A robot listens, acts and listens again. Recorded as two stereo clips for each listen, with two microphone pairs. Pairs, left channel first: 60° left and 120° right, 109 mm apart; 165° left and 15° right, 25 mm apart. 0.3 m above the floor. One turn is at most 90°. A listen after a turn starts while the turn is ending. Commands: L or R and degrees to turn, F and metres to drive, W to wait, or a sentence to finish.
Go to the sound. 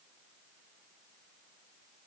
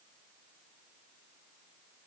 W
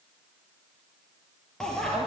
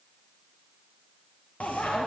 L90
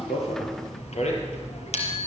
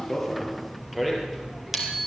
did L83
L65
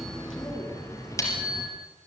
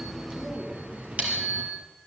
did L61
F1.0
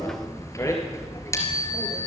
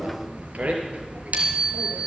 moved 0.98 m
F1.0
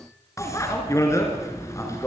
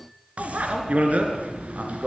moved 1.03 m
F1.0
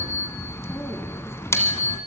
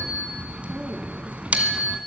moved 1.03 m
F1.0
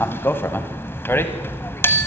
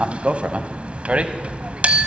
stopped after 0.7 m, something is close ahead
I am next to the bicycle bell.